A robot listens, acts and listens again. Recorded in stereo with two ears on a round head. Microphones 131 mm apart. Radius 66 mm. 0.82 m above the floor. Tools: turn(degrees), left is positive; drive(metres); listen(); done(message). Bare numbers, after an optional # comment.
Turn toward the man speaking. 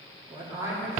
# The man speaking: about 20° right or 160° right.
turn(-20)
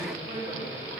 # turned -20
# The man speaking: about 30° right or 150° right.
turn(-30)
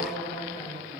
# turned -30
# So it is at 125° right.
turn(-125)
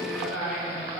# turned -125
done("Facing the man speaking, 2 to 4 m away.")